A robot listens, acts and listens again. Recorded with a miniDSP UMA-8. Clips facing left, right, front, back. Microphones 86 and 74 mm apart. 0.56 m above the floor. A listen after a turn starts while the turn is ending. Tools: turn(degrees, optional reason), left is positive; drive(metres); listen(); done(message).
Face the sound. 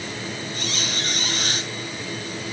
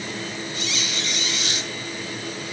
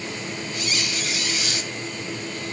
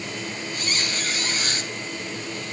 turn(degrees=135, reason="The squeak: 135° left.")
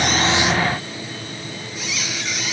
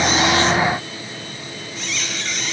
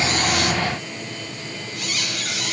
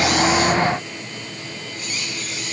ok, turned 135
done("Facing the squeak.")